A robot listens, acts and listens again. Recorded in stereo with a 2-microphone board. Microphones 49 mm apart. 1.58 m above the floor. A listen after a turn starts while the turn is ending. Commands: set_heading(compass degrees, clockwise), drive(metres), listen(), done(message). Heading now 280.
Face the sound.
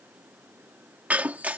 set_heading(315)
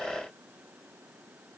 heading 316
listen()
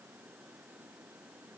done("I heard breaking glass, but can't make it out now. It was about straight ahead or 110° right.")